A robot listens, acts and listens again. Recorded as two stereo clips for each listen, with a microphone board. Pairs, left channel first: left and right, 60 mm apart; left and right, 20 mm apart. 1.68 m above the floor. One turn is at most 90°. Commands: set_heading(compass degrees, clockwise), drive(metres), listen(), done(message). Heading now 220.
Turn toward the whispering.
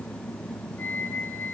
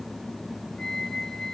listen()
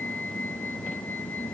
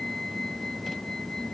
listen()
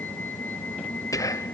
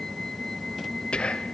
set_heading(150)
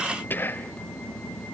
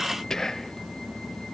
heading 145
set_heading(110)
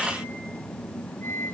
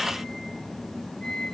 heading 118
listen()
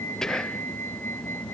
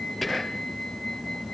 set_heading(108)
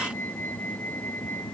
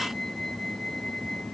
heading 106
done("Found it: whispering, straight ahead, under 1 m away.")